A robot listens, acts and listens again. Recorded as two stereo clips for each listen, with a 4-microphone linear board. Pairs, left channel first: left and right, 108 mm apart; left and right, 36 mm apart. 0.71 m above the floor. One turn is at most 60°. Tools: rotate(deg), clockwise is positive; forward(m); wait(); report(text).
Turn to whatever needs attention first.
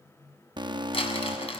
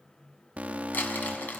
rotate(45)
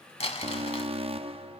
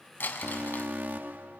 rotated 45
rotate(60)
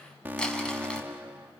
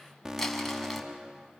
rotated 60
rotate(20)
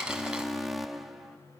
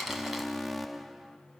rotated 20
report("Facing the alarm, under 1 m away.")